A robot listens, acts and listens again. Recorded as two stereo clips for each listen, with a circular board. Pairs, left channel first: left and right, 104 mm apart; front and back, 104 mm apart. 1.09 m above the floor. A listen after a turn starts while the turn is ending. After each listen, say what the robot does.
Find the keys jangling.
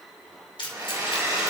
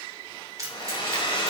Turn 125° left.
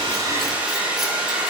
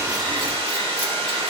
Keep listening.
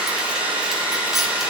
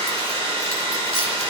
Keep listening.
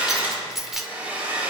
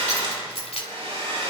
Found it: keys jangling, straight ahead.